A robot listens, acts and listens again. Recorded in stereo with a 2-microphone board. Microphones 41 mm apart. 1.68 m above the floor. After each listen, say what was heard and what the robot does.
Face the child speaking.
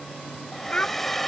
The child speaking: about 25° left or 155° left. Turn 25° left.
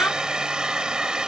Keep listening.
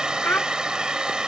So it is at 125° left. Turn 125° left.
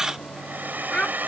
The child speaking is now 20° left. Turn 20° left.
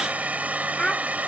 Facing the child speaking.